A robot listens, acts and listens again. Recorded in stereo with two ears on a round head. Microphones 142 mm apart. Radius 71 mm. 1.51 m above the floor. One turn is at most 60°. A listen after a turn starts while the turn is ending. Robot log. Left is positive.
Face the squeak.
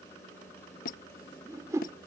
note: The squeak: about 60° left or 120° left.
cmd yaw +60
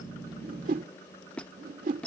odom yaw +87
note: So it is at 10° left.
cmd yaw +10
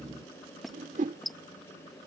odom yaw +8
end: Facing the squeak.